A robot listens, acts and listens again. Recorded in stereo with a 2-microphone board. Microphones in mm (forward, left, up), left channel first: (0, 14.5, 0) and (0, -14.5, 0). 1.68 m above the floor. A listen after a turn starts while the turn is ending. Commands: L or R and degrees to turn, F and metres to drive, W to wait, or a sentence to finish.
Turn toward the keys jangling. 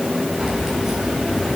R20
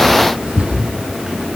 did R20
R140
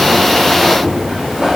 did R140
R15
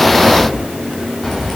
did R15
Found it: keys jangling, straight ahead, over 4 m away.